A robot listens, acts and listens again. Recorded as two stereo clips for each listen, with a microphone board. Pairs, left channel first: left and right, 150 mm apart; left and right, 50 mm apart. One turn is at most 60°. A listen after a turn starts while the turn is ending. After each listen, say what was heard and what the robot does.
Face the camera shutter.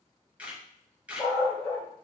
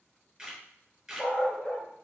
Turn 30° right.
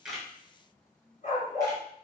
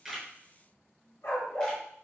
Keep listening.
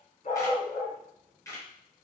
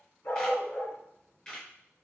So it is at 20° left. Turn 20° left.
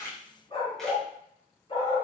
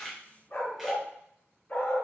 Keep listening.
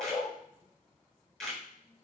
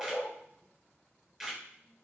Found it: a camera shutter, straight ahead, 2 to 4 m away.